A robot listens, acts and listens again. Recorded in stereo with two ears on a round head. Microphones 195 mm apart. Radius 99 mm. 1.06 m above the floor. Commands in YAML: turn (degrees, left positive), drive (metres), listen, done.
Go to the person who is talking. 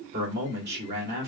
turn: -45
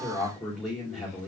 drive: 1.0
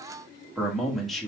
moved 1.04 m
drive: 1.0
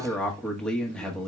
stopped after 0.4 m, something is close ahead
done: "I am next to the man speaking."